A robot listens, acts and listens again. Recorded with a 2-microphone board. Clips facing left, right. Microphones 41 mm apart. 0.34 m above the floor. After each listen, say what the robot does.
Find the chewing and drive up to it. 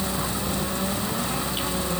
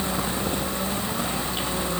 Keep listening.
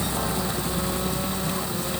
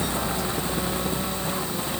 Keep listening.
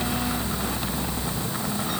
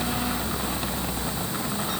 I can't make out chewing to turn to.